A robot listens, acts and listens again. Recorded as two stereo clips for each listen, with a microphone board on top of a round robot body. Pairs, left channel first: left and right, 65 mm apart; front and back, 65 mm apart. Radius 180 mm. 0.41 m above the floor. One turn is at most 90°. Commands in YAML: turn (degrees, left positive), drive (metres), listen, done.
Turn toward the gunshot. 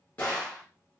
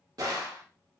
turn: 90
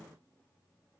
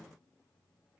turn: 70
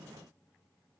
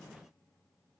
done: "I heard a gunshot from this way, but can't make it out now."